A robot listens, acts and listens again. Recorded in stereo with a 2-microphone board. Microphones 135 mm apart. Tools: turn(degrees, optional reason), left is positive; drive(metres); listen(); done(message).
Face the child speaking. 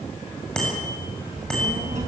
turn(degrees=-60, reason="The child speaking: about 60° right or 120° right.")
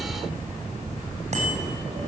turn(degrees=-65, reason="So it is at 65° right.")
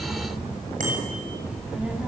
turn(degrees=-10, reason="The child speaking is now 10° right.")
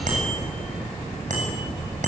done("Facing the child speaking.")